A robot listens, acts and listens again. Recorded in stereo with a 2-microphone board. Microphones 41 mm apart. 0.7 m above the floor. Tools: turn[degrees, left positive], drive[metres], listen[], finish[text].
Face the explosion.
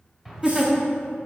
Action: turn[-30]
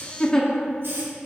Action: listen[]
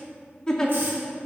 Action: finish[I heard an explosion, but can't make it out now. It was about 25° left or 145° right.]